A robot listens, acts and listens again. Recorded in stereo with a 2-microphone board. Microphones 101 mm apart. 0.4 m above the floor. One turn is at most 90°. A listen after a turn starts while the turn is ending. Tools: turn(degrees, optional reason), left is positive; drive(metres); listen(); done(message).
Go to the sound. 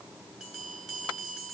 turn(degrees=-30)
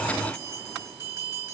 turn(degrees=-90, reason="So it is at 145° right.")
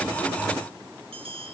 turn(degrees=-85, reason="The bell is now 85° right.")
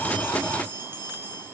turn(degrees=-20, reason="The bell is now 20° right.")
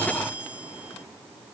drive(metres=1.0)
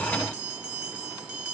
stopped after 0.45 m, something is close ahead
turn(degrees=-15, reason="The bell is now 15° right.")
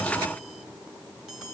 done("Something is in my way. I am facing the bell but have not reached it.")